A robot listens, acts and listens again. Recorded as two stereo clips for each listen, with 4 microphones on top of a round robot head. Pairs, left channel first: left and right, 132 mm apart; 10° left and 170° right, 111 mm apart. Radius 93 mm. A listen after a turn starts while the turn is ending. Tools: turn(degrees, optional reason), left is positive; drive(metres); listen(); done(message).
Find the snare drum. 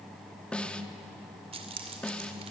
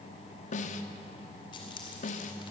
turn(degrees=10, reason="The snare drum: 10° left.")
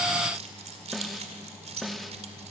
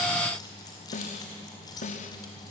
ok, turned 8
done("Found it: a snare drum, straight ahead.")